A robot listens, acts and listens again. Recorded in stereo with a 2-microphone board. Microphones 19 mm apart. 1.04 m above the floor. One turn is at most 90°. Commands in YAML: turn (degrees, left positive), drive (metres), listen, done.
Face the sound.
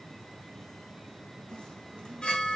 turn: 55
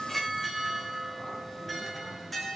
done: "Facing the chime."